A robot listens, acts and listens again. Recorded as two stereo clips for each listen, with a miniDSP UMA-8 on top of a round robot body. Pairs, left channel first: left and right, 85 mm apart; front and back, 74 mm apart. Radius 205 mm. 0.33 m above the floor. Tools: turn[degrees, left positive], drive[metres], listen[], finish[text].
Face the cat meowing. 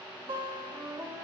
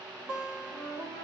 Action: listen[]
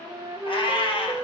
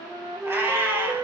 Thought: The cat meowing: 115° left.
Action: turn[115]
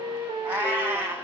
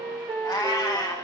Thought: The cat meowing is now 25° right.
Action: turn[-25]
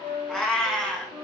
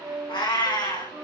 Thought: The cat meowing is now 10° left.
Action: turn[10]
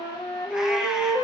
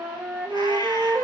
Action: listen[]
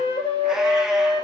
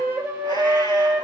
Action: listen[]
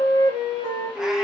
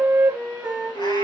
Action: finish[I heard a cat meowing from this way, but can't make it out now.]